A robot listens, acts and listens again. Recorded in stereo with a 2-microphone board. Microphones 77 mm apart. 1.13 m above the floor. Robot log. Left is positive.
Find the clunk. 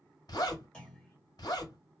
cmd yaw +30
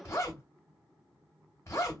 cmd idle
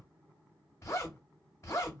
end: I heard a clunk, but can't make it out now. It was about 20° right or 140° left.